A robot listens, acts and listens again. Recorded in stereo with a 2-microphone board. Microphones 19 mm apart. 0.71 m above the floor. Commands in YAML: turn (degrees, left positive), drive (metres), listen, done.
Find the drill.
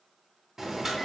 listen: true
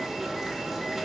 listen: true
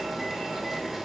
done: "I can't make out a drill to turn to."